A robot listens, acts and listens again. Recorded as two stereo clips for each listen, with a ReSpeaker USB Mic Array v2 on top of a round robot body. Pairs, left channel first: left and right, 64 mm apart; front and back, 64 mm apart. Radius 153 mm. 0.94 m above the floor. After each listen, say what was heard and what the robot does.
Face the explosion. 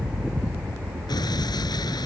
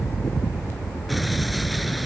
The explosion: 90° left. Turn 90° left.
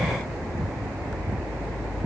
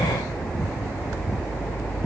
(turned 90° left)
I heard an explosion from this way, but can't make it out now.